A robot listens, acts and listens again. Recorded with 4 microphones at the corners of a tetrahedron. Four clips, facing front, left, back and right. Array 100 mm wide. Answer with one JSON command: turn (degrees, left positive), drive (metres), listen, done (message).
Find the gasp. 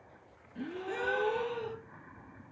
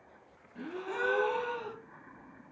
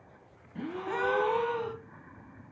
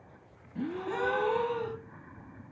{"turn": -165}
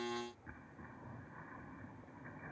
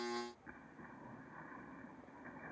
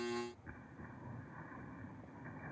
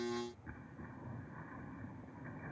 {"done": "I heard a gasp from this way, but can't make it out now."}